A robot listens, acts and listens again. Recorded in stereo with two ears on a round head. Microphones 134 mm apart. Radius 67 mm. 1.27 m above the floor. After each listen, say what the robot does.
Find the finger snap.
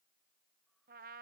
Keep listening.
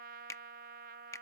Turn 20° left.
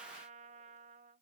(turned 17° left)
Keep listening.
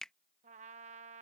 Found it: a finger snap, straight ahead.